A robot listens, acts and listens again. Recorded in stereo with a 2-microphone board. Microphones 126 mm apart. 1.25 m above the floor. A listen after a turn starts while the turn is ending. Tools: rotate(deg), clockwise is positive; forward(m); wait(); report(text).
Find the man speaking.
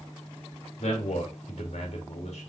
rotate(-60)
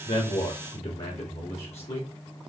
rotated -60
rotate(-60)
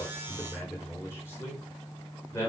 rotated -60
rotate(-25)
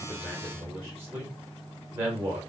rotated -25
rotate(20)
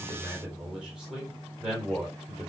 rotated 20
report("Facing the man speaking.")